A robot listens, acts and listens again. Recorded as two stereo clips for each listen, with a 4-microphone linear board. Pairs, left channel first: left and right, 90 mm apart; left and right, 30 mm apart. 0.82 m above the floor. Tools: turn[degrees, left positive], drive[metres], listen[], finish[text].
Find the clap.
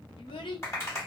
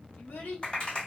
Thought: The clap: about 30° left or 150° left.
Action: turn[30]
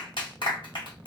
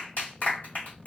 Thought: So it is at 115° left.
Action: turn[115]
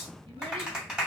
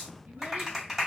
Thought: The clap is now 10° right.
Action: turn[-10]
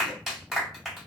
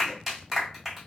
Action: finish[Found it: a clap, straight ahead, 1 to 2 m away.]